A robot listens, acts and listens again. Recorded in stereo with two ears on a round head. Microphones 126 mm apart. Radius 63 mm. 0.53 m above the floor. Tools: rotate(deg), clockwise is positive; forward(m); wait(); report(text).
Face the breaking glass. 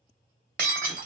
rotate(70)
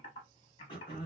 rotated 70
wait()
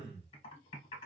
report("I heard breaking glass, but can't make it out now. It was about straight ahead or 40° right.")